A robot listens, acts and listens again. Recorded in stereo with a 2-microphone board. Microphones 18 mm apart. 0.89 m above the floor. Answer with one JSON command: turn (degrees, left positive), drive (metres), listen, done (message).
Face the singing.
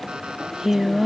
{"turn": -30}
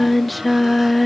{"done": "Found it: singing, straight ahead."}